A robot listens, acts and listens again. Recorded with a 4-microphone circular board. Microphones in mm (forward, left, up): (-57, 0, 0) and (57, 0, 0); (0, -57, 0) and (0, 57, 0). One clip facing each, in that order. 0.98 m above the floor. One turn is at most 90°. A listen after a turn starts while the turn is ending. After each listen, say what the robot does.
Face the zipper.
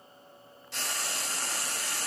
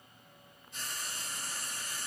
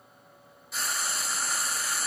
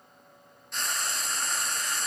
Keep listening.
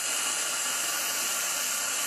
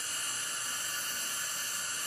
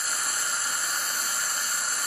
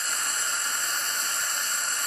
Keep listening.
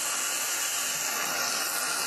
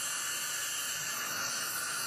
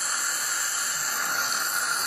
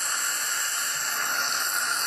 I can't make out a zipper to turn to.